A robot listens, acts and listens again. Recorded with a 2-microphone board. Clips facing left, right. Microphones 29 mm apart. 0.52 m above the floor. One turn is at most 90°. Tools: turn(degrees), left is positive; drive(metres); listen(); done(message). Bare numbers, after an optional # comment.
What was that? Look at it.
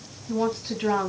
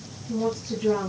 # The woman speaking: about 55° left or 125° left.
turn(55)
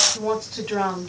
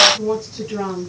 # So it is at 75° left.
turn(75)
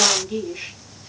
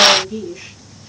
# The woman speaking is now 35° left.
turn(35)
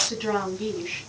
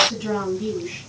# The woman speaking is now 35° left.
turn(35)
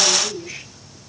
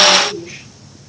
# The woman speaking is now 10° right.
turn(-10)
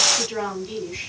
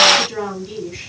done("Found it: a woman speaking, straight ahead, over 4 m away.")